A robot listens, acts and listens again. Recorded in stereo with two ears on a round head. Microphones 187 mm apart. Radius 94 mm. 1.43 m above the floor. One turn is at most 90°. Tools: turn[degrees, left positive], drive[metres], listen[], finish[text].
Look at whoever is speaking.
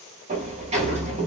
Action: listen[]
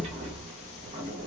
Action: listen[]
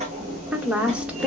Action: turn[-30]
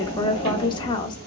Thought: So it is at 25° left.
Action: turn[25]
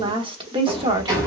Thought: The woman speaking is now 25° right.
Action: turn[-25]
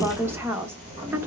Thought: The woman speaking is now 10° right.
Action: turn[-10]
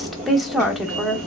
Action: finish[Found it: a woman speaking, straight ahead, 1 to 2 m away.]